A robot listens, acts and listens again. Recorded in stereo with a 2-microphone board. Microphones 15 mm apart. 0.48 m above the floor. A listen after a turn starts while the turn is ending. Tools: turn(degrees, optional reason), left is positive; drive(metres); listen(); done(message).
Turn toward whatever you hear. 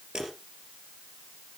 turn(degrees=-60, reason="The dropped coin: about 60° right or 120° right.")
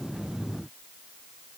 listen()
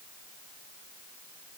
done("I heard a dropped coin, but can't make it out now. It was about straight ahead or 60° right.")